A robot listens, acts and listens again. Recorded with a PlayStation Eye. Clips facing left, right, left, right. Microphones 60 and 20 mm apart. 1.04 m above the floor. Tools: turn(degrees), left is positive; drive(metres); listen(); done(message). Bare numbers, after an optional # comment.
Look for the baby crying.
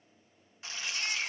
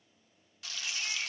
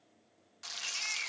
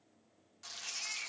# The baby crying: about 65° left or 115° left.
turn(65)
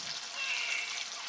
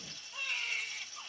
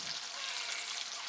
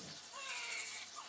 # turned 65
listen()
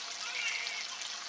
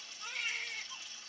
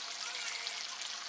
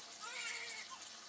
listen()
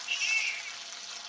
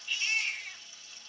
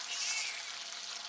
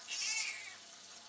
done("Found it: a baby crying, straight ahead.")